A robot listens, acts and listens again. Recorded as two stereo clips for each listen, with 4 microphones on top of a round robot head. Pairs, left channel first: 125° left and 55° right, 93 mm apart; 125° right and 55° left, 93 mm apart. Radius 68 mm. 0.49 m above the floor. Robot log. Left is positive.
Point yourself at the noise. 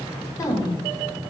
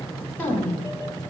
note: The woman speaking: 165° left.
cmd yaw +165
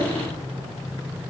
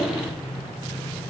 cmd idle
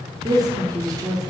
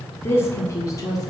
note: The woman speaking is now 90° right.
cmd yaw -90
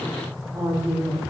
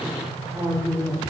end: Facing the woman speaking, 2 to 4 m away.